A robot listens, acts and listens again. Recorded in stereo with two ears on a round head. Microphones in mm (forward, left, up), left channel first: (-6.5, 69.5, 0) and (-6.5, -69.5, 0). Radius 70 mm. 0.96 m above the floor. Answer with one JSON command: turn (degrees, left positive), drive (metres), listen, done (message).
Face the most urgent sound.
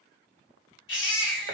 {"turn": 90}
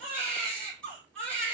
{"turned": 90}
{"done": "Found it: a baby crying, straight ahead, 2 to 4 m away."}